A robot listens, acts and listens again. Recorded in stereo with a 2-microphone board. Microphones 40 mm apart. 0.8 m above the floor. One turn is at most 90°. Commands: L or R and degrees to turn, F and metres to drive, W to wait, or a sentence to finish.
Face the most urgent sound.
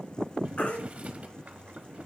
W
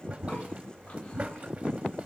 W
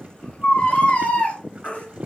L35
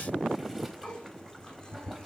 W
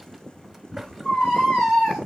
Found it: a baby crying, straight ahead.